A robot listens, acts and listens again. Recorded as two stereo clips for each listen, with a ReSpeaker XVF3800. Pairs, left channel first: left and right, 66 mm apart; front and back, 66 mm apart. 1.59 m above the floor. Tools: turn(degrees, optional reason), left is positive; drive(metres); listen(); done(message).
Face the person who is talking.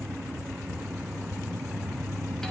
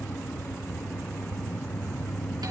listen()
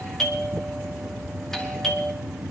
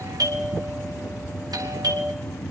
listen()
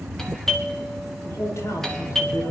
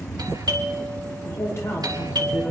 turn(degrees=45, reason="The man speaking: 45° left.")
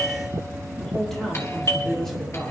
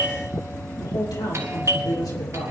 done("Facing the man speaking.")